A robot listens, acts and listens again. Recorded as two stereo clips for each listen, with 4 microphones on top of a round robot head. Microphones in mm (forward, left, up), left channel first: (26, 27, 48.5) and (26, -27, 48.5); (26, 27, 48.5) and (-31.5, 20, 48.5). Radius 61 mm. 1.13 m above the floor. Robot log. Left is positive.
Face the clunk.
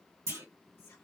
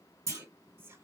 note: The clunk: 130° right.
cmd yaw -130
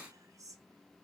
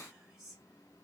end: Facing where the clunk came from. I can't hear it now.